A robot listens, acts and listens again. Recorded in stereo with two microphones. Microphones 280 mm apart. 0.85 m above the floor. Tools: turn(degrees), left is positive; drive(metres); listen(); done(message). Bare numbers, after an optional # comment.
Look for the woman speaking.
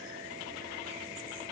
listen()
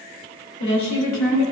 # The woman speaking: about 70° left or 110° left.
turn(70)
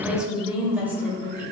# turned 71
# So it is at 10° right.
turn(-10)
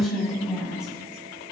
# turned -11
done("Facing the woman speaking, 2 to 4 m away.")